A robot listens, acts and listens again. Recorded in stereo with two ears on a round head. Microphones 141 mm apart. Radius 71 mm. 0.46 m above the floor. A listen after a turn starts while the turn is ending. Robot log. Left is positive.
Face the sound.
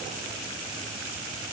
cmd idle
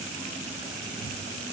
cmd idle
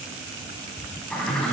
cmd yaw +30
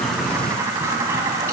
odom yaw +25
note: So it is at 20° right.
cmd yaw -20
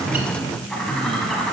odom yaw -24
end: Facing the bird, 1 to 2 m away.